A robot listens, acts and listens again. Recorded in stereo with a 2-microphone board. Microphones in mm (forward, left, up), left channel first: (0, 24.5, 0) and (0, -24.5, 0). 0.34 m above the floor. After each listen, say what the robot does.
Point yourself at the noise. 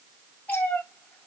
Turn 30° left.
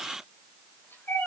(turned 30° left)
Turn 40° left.
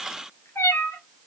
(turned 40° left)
Turn 120° left.
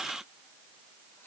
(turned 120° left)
Keep listening.
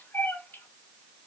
Turn 40° left.
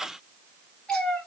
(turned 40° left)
Turn 15° left.
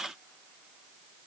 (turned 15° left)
Keep listening.
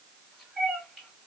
Facing the cat meowing.